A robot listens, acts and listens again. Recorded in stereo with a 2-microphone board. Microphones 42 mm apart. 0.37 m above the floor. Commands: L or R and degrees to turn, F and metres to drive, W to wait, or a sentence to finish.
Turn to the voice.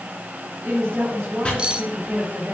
R65
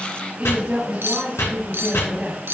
R30
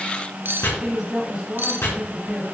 R15
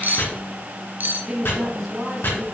Found it: a woman speaking, straight ahead.